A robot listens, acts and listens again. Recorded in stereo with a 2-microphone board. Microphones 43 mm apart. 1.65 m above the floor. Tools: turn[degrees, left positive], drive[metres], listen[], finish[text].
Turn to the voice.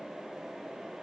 Action: listen[]
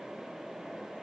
Action: listen[]
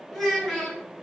Action: turn[30]
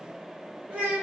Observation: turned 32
Thought: So it is at 30° right.
Action: turn[-30]
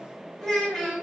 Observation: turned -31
Action: finish[Facing the child speaking.]